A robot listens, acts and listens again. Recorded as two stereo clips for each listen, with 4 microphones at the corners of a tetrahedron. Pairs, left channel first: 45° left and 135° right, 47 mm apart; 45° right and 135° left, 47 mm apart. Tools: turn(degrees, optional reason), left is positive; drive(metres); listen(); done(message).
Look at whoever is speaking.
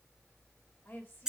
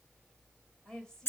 turn(degrees=25, reason="The woman speaking: 25° left.")
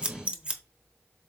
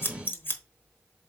listen()
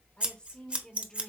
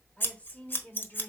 turn(degrees=-25, reason="The woman speaking is now 25° right.")
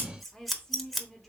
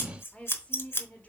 turn(degrees=-40, reason="The woman speaking is now 40° right.")
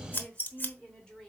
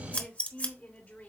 turn(degrees=-20, reason="The woman speaking is now 20° right.")
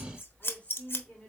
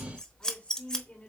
done("Found it: a woman speaking, straight ahead.")